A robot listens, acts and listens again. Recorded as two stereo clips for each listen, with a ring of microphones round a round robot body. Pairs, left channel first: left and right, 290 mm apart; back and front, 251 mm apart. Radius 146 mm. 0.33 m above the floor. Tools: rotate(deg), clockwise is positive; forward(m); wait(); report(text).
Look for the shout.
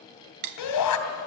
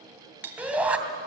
rotate(-85)
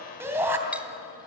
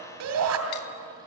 rotate(10)
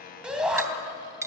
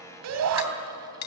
report("Found it: a shout, straight ahead.")